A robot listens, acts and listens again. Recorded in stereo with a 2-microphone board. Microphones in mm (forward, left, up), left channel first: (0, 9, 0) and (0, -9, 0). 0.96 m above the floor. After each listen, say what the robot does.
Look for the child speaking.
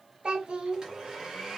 Turn 65° right.
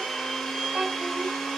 Turn 55° right.
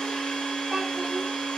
Keep listening.
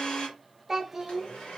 Turn 15° right.
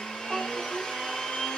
Found it: a child speaking, straight ahead, under 1 m away.